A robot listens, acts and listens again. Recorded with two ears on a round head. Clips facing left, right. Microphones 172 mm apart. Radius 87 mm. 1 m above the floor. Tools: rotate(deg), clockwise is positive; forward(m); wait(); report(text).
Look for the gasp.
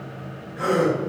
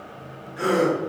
rotate(40)
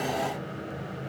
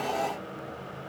wait()
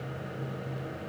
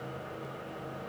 report("I heard a gasp, but can't make it out now. It was about straight ahead or 100° right.")